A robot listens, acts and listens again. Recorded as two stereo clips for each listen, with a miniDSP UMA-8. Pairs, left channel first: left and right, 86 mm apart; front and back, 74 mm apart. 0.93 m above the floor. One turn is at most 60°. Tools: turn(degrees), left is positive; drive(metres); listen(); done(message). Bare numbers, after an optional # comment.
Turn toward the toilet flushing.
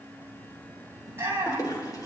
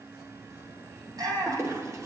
# The toilet flushing: 135° left.
turn(60)
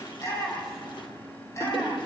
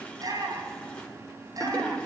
# The toilet flushing is now 70° left.
turn(60)
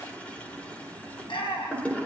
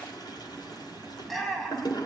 # The toilet flushing is now 15° left.
turn(15)
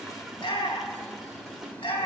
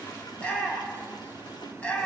listen()
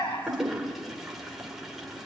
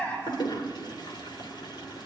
done("Facing the toilet flushing, 2 to 4 m away.")